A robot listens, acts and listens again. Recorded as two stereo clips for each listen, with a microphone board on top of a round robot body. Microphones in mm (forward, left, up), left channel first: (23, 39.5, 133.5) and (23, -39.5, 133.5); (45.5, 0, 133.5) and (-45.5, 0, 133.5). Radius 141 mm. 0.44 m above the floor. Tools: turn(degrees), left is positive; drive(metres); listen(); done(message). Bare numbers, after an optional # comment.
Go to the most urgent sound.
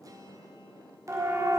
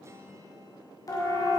# The siren: 45° right.
turn(-45)
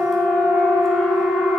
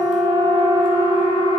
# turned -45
drive(1.0)
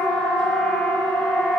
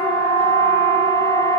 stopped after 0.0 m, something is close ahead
done("Blocked. The siren is further on, straight ahead.")